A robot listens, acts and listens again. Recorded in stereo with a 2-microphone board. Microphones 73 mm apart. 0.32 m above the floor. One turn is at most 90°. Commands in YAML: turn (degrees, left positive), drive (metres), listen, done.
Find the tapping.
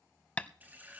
turn: 20
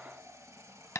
turn: 90
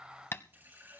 turn: 35
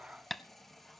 done: "Found it: tapping, straight ahead."